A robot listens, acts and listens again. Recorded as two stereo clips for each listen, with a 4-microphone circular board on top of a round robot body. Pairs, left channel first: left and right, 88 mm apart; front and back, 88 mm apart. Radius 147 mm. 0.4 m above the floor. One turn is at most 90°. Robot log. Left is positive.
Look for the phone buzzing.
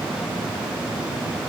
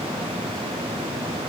cmd idle
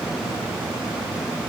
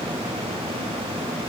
cmd idle
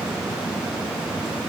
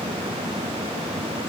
end: I can't make out a phone buzzing to turn to.